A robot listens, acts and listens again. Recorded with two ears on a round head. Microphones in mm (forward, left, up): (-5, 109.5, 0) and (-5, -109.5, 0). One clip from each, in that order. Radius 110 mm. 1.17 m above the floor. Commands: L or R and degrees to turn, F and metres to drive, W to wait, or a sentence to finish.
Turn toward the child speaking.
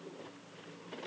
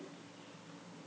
W
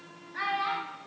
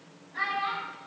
L30
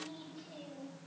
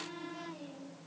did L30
L135
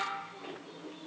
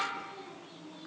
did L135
Found it: a child speaking, straight ahead, 2 to 4 m away.